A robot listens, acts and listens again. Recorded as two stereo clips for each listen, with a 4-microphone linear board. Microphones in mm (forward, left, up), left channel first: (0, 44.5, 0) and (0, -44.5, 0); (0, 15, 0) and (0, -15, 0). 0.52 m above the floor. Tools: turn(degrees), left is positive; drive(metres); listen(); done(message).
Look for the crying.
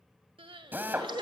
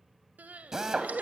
turn(degrees=-70)
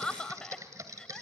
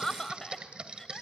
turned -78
turn(degrees=10)
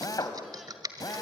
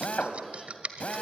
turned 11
listen()
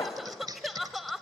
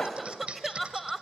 done("Found it: crying, straight ahead.")